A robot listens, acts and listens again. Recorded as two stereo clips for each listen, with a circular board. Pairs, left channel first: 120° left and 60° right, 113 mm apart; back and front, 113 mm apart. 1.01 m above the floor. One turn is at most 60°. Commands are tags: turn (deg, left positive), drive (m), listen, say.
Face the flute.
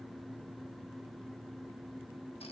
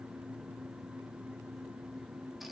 <listen/>
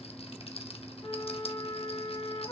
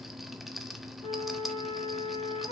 <turn deg="60"/>
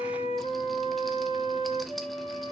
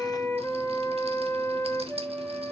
<turn deg="60"/>
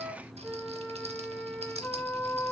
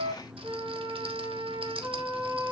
<turn deg="45"/>
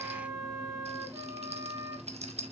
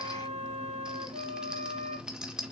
<say>Facing the flute, over 4 m away.</say>